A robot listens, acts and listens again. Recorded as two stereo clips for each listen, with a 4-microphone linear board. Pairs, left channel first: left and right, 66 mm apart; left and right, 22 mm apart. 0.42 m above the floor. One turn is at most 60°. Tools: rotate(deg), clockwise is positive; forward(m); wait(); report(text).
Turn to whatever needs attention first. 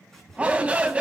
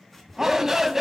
rotate(20)
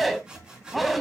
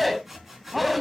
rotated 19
report("Found it: a shout, straight ahead.")